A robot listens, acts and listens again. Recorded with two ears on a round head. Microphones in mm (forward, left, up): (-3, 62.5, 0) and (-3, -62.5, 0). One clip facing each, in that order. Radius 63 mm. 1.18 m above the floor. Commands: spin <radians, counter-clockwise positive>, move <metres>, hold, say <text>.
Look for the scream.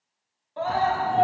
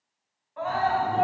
spin 0.61
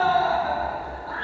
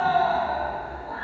spin 1.92
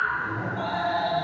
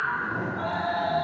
spin 0.52
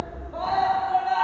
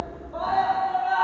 spin 0.17
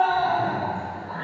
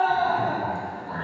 say Found it: a scream, straight ahead, under 1 m away.